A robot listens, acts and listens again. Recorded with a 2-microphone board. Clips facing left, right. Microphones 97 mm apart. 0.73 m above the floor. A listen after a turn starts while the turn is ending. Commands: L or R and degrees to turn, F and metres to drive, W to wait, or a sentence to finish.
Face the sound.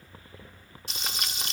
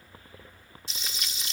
L65
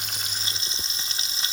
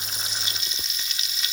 L40
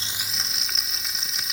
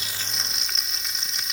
Facing the frying.